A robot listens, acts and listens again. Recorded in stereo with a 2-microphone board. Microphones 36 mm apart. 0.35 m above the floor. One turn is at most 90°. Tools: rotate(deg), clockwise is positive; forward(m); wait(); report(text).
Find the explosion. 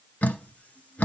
wait()
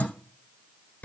wait()
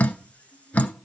report("I can't make out an explosion, only dripping.")